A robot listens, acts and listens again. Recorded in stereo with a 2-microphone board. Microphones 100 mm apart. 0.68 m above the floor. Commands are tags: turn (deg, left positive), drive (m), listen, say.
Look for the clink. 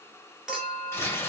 <turn deg="-30"/>
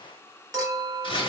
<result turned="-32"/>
<turn deg="-140"/>
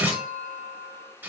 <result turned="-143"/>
<say>Facing the clink.</say>